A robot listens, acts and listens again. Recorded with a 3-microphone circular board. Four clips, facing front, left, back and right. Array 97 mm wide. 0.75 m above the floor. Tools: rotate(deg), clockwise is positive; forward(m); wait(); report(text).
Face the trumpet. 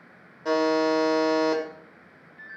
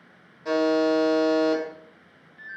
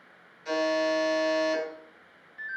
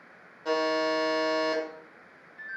wait()
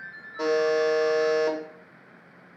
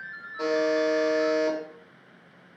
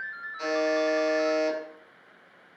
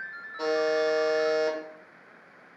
wait()
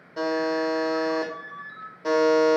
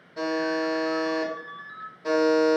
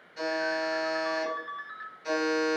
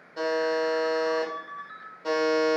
report("I can't make out a trumpet, only a buzzer and a ringtone.")